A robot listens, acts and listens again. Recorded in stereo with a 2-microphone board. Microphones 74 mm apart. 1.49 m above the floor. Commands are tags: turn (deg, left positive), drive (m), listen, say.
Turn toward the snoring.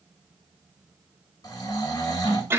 <turn deg="60"/>
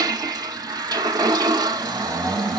<turn deg="10"/>
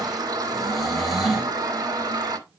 <say>Facing the snoring, 2 to 4 m away.</say>